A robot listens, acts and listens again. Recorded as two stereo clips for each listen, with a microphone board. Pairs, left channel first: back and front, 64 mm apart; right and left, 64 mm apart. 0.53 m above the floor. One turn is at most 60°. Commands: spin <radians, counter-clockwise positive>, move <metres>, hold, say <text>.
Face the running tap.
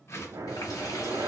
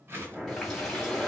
spin -1.05
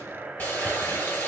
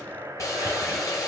spin -1.05
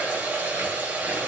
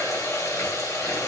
spin -1.05
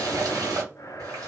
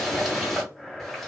say Facing the running tap, 2 to 4 m away.